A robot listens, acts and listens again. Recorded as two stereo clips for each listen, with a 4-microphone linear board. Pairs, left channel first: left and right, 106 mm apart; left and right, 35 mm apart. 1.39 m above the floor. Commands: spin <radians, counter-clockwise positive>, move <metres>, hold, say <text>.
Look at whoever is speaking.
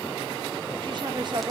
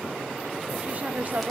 spin -0.87
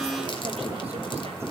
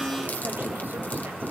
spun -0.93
hold
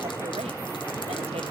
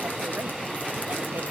hold
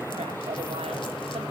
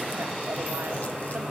say I heard a woman speaking, but can't make it out now. It was about 5° left or 80° right.